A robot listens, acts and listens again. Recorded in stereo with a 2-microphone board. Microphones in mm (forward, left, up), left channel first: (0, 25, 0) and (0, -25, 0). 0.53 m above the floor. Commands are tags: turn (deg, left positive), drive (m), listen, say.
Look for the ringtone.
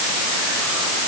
<listen/>
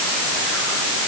<listen/>
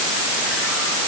<say>I can't make out a ringtone to turn to.</say>